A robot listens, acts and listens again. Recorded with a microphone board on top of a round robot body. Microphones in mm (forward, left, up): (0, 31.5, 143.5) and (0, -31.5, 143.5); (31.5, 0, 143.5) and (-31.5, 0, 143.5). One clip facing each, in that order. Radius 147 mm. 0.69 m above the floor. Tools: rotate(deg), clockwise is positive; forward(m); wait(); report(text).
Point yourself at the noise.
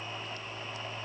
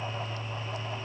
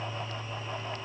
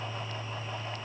wait()
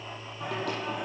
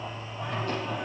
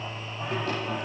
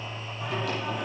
rotate(-60)
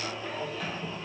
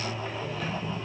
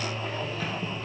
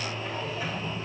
report("Found it: singing, straight ahead.")